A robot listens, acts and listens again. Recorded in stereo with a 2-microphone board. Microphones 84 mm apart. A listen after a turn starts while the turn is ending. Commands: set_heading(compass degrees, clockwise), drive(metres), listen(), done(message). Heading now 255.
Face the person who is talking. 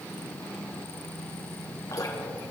listen()
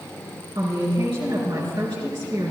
set_heading(345)
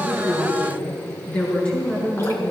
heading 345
set_heading(330)
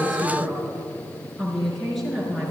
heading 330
done("Facing the woman speaking, over 4 m away.")